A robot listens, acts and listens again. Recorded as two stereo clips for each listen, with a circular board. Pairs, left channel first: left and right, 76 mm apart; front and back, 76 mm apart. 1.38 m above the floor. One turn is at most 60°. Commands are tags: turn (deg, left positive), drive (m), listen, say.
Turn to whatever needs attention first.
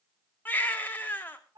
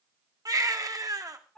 <turn deg="60"/>
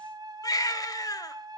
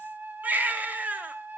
<turn deg="60"/>
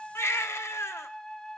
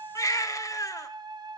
<turn deg="40"/>
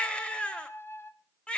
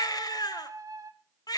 <turn deg="15"/>
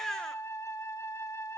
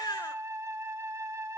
<say>Facing the baby crying, 1 to 2 m away.</say>